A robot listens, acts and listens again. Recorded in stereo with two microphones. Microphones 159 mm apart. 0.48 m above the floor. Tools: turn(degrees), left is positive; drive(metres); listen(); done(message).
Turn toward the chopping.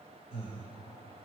listen()
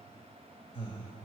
listen()
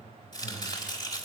turn(degrees=30)
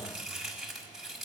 done("Found it: chopping, straight ahead.")